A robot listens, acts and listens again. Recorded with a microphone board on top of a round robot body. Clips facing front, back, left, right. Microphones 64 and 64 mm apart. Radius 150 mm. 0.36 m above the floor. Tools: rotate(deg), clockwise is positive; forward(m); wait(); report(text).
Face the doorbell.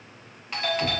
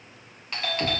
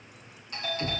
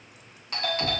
rotate(85)
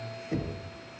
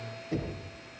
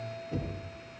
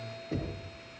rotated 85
rotate(-20)
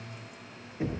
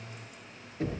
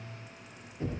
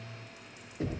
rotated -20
wait()
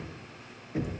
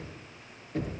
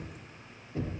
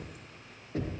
wait()
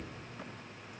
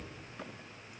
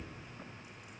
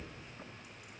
report("I heard a doorbell from this way, but can't make it out now.")